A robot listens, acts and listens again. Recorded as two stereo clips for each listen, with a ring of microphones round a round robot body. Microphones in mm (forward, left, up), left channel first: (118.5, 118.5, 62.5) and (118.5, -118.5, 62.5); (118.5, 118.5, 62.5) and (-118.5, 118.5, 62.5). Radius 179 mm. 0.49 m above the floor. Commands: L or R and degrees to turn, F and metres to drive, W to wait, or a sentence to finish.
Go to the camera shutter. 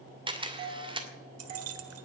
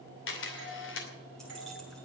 R25
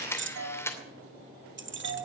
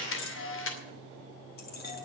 L10
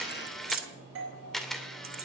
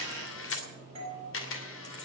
F1.0
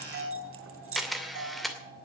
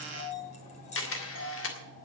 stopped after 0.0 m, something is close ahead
Blocked. The camera shutter is further on, straight ahead.